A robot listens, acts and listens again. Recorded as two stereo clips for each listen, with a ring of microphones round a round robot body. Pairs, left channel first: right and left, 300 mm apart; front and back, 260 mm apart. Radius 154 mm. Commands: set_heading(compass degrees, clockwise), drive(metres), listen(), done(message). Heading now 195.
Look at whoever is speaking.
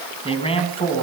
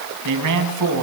set_heading(355)
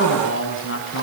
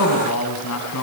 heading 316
set_heading(356)
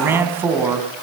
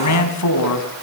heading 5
done("Found it: a man speaking, straight ahead.")